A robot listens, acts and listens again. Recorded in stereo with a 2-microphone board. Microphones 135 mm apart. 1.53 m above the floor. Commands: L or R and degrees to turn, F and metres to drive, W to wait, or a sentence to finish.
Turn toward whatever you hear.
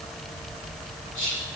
L70
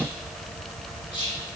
L35
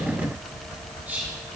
R15
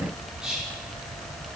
Facing the whispering.